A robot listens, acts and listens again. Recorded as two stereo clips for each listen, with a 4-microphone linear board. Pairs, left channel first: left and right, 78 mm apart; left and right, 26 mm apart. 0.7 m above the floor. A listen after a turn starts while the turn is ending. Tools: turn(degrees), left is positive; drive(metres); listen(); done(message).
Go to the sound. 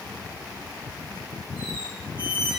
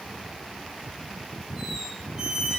turn(degrees=-15)
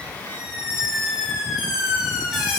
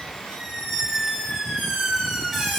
drive(metres=1.0)
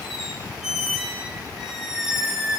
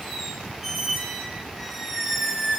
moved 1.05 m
drive(metres=1.0)
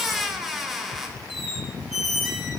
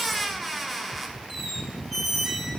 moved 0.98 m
drive(metres=1.0)
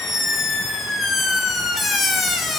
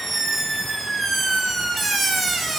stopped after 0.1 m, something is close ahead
done("Arrived at the squeak, straight ahead.")